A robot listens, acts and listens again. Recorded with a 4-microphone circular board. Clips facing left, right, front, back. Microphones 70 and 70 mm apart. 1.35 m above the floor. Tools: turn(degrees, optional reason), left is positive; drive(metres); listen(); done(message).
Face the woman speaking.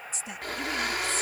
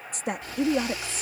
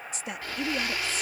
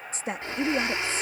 turn(degrees=-120, reason="The woman speaking: 120° right.")
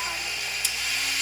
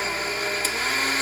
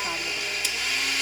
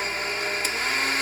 listen()
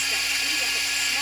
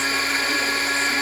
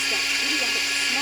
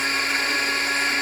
listen()
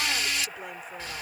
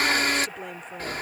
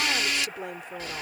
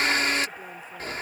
done("I heard a woman speaking from this way, but can't make it out now.")